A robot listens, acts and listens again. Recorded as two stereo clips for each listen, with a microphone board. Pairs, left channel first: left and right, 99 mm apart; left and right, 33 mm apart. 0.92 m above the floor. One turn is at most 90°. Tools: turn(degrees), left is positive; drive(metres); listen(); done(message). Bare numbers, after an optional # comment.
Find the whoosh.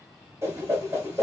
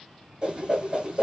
# The whoosh: about 30° right or 150° right.
turn(-30)
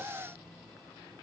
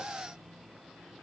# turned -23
listen()
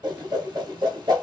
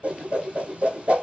# So it is at 125° right.
turn(-90)
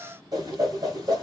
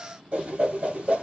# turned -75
# The whoosh is now 50° right.
turn(-50)
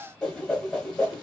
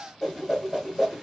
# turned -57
done("Facing the whoosh, 1 to 2 m away.")